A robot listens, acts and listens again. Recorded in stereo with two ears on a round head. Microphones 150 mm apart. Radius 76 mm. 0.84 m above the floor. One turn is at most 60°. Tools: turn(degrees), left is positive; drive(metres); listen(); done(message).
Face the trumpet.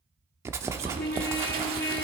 turn(degrees=60)
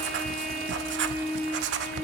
done("Found it: a trumpet, straight ahead.")